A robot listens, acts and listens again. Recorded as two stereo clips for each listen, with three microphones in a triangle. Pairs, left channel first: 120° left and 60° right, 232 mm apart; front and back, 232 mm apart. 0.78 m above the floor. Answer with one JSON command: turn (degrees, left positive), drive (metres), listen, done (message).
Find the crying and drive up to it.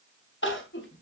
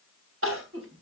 {"turn": 155}
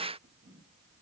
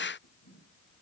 {"listen": true}
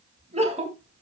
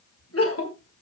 {"drive": 1.0}
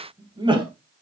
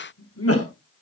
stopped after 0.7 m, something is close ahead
{"turn": 10}
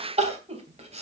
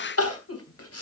{"done": "Blocked. The crying is further on, straight ahead."}